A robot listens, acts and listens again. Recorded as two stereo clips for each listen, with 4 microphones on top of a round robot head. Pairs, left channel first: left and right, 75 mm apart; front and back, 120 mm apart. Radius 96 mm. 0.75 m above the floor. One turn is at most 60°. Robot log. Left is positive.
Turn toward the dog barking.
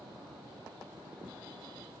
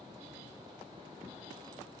cmd idle
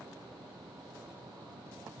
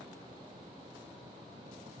cmd idle
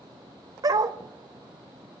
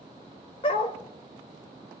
note: The dog barking: 55° right.
cmd yaw -55
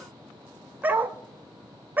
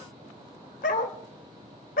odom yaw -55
note: The dog barking is now 25° right.
cmd yaw -25
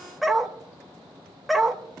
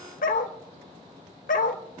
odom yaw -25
end: Found it: a dog barking, straight ahead.